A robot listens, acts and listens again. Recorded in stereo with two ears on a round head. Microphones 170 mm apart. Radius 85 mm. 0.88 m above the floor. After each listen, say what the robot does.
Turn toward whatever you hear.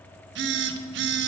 Turn 65° right.
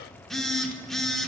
Found it: a phone buzzing, straight ahead.